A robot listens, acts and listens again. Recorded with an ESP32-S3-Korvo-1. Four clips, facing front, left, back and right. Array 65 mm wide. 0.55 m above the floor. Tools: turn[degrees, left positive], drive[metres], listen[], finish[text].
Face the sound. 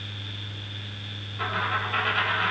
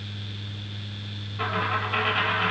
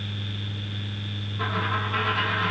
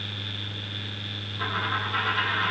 Thought: The dropped coin: 70° left.
Action: turn[70]
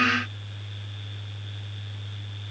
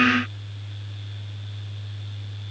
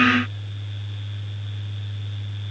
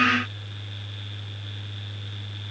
Action: finish[I heard a dropped coin from this way, but can't make it out now.]